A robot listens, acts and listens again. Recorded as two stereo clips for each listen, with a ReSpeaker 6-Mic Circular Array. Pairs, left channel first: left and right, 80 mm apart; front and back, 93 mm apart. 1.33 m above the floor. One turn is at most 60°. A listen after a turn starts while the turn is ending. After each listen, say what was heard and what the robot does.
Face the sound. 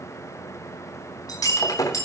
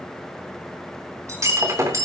The breaking glass: 125° left. Turn 60° left.
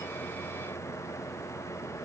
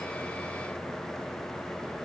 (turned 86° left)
Nothing new. It was at 40° left. Turn 40° left.
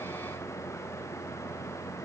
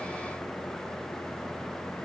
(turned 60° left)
Nothing new. It was at 20° right. Turn 20° right.
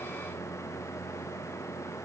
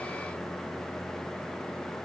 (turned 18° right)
Facing where the breaking glass came from. I can't hear it now.